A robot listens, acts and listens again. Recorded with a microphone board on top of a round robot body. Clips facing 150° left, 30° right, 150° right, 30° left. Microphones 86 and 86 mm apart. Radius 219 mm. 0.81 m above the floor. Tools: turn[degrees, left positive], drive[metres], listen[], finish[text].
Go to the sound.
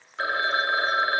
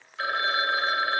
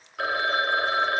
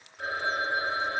Thought: The phone ringing: 155° right.
Action: turn[-155]
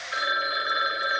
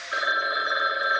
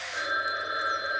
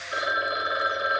Thought: The phone ringing is now 25° left.
Action: turn[25]
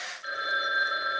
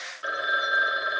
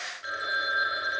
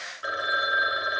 Thought: The phone ringing is now 10° right.
Action: turn[-10]
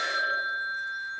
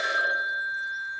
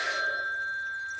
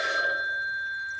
Action: drive[1.0]
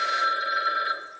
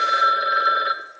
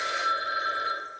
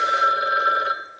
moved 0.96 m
Action: drive[1.0]
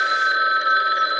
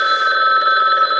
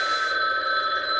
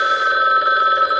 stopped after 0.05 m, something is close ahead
Action: finish[I am next to the phone ringing.]